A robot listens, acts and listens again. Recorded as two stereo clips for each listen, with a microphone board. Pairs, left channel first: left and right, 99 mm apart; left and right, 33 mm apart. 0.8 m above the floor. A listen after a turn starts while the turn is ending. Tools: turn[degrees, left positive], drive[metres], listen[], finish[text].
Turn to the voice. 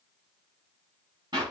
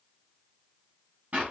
Action: listen[]
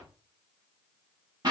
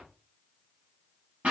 Action: listen[]
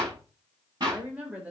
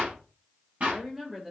Action: turn[-30]
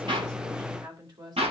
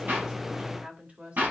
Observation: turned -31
Thought: So it is at 135° right.
Action: turn[-135]
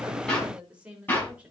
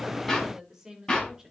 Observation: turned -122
Thought: The woman speaking is now 15° right.
Action: turn[-15]
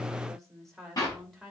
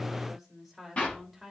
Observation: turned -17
Action: finish[Facing the woman speaking, 2 to 4 m away.]